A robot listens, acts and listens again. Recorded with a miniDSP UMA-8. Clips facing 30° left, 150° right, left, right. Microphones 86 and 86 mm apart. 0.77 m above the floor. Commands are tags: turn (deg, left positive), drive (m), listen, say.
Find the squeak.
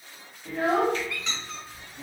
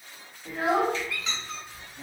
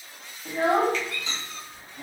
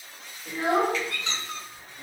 <turn deg="-65"/>
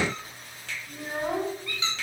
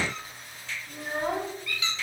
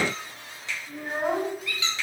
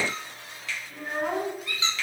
<turn deg="-30"/>
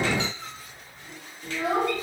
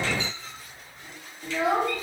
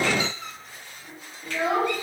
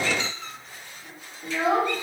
<turn deg="10"/>
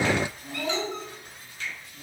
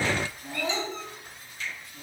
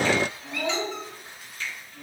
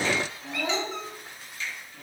<say>Facing the squeak, 1 to 2 m away.</say>